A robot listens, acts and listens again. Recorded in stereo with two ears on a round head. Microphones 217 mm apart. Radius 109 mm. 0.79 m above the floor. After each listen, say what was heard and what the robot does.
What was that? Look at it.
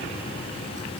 Keep listening.
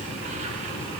Keep listening.
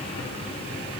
I can't make out anything.